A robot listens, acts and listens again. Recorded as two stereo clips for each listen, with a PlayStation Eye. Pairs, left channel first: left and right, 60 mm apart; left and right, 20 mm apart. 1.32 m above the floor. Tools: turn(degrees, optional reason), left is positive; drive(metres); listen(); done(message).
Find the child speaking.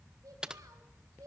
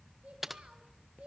turn(degrees=-70, reason="The child speaking: about 70° right or 110° right.")
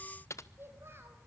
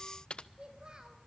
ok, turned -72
turn(degrees=-45, reason="So it is at 45° right.")
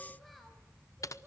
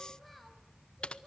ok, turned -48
listen()
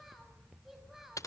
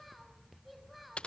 done("Found it: a child speaking, straight ahead, over 4 m away.")